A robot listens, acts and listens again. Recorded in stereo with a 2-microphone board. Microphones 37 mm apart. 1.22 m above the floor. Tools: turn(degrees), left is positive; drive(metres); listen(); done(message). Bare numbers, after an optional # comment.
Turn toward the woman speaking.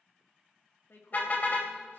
turn(90)
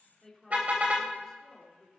# So it is at 10° left.
turn(10)
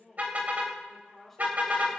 done("Found it: a woman speaking, straight ahead.")